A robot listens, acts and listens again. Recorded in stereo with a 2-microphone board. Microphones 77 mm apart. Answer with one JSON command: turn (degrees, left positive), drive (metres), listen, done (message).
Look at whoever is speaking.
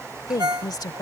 {"turn": 55}
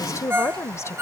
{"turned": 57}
{"turn": 45}
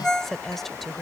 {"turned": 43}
{"done": "Facing the woman speaking."}